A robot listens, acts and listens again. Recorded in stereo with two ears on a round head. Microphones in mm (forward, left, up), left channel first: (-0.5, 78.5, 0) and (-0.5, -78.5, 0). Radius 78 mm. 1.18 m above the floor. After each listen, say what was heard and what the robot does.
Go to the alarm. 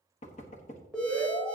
Turn 30° left.
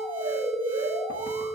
So it is at 25° right. Turn 25° right.
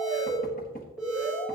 Drive 1.0 m forward.
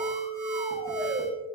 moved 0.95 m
Drive 1.0 m forward.
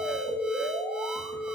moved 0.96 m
Drive 1.0 m forward.
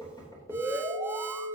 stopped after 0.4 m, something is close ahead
The alarm is now 15° right. Turn 15° right.
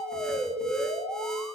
Arrived at the alarm, straight ahead.